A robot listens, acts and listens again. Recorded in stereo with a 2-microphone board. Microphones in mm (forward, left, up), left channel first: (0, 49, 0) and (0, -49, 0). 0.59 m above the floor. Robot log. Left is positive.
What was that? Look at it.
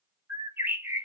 note: The bird: about 20° right or 160° right.
cmd yaw -20
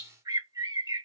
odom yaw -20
note: So it is at 140° right.
cmd yaw -140
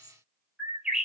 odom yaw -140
note: The bird is now 10° right.
cmd yaw -10
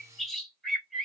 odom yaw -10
end: Found it: a bird, straight ahead.